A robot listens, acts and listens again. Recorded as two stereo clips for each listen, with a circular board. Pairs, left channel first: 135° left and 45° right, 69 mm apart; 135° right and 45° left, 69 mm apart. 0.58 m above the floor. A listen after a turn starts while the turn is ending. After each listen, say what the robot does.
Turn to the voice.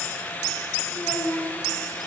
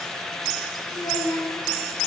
Turn 170° right.
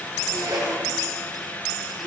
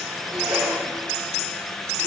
Keep listening.
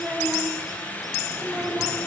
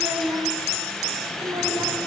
Turn 25° left.
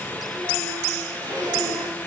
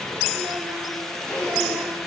Keep listening.
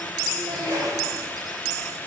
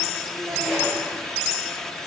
Keep listening.
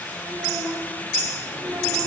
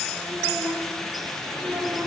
Turn 10° right.
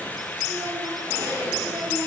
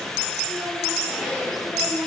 Keep listening.
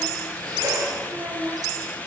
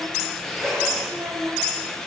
Facing the child speaking, under 1 m away.